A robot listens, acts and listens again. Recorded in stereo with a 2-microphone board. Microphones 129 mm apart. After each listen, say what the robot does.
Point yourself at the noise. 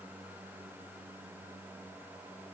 Keep listening.
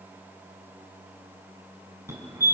Turn 20° right.
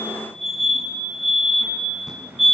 Found it: a fire alarm, straight ahead.